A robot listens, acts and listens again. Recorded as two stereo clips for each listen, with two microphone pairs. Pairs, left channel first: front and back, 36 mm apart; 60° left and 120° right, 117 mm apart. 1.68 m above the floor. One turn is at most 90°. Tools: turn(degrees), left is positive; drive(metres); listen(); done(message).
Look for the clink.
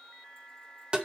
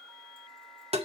listen()
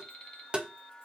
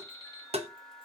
listen()
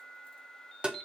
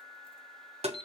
done("I can't make out a clink to turn to.")